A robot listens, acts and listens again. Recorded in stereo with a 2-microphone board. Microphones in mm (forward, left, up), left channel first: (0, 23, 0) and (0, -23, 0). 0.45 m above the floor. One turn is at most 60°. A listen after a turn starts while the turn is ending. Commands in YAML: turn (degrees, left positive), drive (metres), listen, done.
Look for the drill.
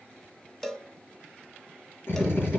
turn: 60
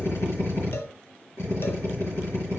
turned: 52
turn: 60
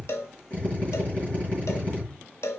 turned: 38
turn: 30
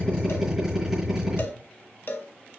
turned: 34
done: "Facing the drill, over 4 m away."